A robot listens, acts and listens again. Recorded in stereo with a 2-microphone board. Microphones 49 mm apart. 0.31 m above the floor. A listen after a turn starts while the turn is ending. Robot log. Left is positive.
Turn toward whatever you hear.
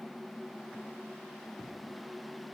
cmd idle
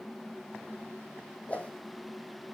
note: The whoosh: about 30° left or 150° left.
cmd yaw +30
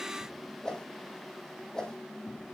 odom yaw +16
note: So it is at 15° left.
cmd yaw +15
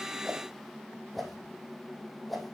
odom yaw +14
end: Found it: a whoosh, straight ahead.